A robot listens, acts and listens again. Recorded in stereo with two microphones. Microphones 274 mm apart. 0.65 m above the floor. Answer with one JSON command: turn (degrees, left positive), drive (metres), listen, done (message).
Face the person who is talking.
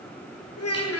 {"turn": 60}
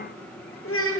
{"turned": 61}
{"turn": 55}
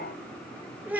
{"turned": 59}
{"done": "Found it: a child speaking, straight ahead, 1 to 2 m away."}